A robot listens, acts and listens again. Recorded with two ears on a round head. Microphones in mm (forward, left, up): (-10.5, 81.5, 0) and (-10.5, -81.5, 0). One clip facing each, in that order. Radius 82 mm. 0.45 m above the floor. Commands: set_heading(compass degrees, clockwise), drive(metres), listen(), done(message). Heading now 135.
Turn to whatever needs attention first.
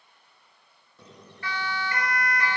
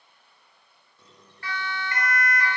set_heading(45)
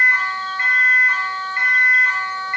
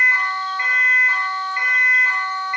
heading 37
set_heading(57)
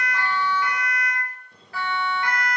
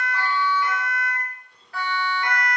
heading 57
done("Facing the siren.")